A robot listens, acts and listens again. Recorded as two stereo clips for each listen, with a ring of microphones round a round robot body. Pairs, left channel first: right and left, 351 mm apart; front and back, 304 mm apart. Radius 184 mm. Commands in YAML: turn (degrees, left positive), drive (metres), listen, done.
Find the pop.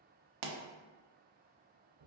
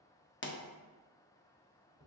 turn: 55
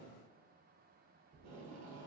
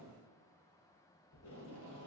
done: "Facing where the pop came from. I can't hear it now."